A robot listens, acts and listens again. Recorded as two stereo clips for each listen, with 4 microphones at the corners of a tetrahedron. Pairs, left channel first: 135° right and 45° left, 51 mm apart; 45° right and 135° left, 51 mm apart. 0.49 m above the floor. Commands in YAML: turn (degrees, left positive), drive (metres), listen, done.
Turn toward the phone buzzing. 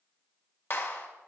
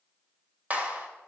listen: true
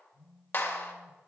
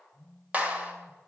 turn: 45
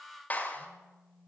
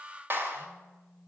turn: 30
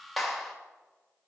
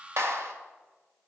listen: true
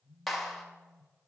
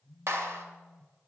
done: "Facing the phone buzzing, over 4 m away."